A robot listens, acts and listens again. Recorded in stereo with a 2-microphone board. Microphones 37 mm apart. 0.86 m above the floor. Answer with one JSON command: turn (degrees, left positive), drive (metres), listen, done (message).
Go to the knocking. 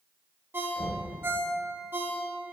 {"turn": 30}
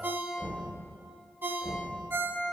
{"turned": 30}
{"turn": 140}
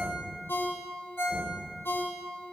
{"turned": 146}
{"listen": true}
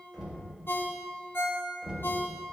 {"drive": 1.0}
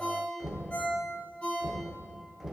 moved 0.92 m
{"turn": -10}
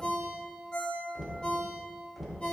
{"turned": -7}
{"drive": 1.0}
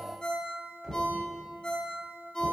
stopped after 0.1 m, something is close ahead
{"done": "I am next to the knocking."}